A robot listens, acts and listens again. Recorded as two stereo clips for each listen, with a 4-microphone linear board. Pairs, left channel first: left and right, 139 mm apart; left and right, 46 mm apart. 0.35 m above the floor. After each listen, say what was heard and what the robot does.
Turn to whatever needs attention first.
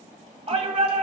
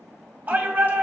The shout: about 45° right or 135° right. Turn 45° right.
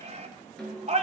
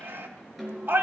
So it is at 80° right. Turn 80° right.
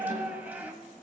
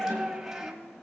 The shout is now 15° right. Turn 15° right.
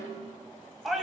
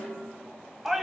Facing the shout, 1 to 2 m away.